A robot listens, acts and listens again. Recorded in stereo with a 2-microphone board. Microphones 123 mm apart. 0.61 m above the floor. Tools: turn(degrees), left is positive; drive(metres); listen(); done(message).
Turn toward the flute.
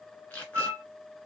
turn(degrees=-25)
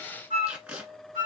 turn(degrees=-130)
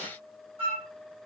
turn(degrees=-50)
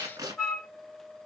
done("Facing the flute, 2 to 4 m away.")